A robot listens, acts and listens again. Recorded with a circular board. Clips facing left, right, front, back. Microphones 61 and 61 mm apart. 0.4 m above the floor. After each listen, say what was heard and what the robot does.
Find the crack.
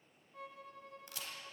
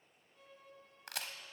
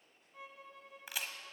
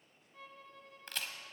The crack: 80° right. Turn 80° right.
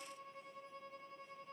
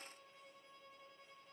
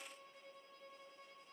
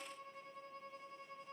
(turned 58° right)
Nothing new. It was at 25° right. Turn 25° right.
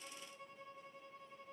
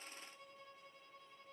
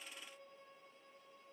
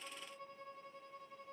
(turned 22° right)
Facing where the crack came from. I can't hear it now.